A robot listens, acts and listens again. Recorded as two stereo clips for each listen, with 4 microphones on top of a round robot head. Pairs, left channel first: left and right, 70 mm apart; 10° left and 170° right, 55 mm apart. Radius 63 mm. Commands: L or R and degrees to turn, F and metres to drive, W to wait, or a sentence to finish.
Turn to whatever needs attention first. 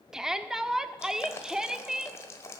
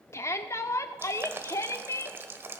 R10
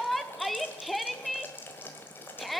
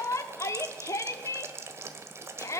Found it: a shout, straight ahead.